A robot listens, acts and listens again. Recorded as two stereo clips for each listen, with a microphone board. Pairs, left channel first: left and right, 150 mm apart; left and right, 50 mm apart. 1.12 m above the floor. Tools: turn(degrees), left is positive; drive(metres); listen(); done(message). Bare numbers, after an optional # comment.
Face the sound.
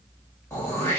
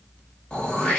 # The throat clearing: about 20° left or 160° left.
turn(20)
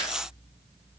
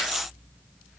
listen()
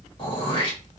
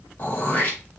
# So it is at 140° left.
turn(140)
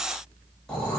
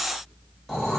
done("Facing the throat clearing, 1 to 2 m away.")